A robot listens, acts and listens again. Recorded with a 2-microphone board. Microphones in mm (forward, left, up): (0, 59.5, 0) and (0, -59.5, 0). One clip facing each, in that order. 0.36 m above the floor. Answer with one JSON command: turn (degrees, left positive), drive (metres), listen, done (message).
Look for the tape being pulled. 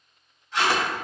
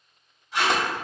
{"turn": -30}
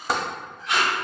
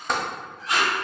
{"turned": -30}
{"turn": -135}
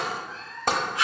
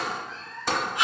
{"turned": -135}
{"turn": -25}
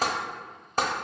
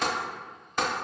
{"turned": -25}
{"listen": true}
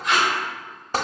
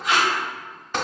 {"done": "Facing the tape being pulled, 1 to 2 m away."}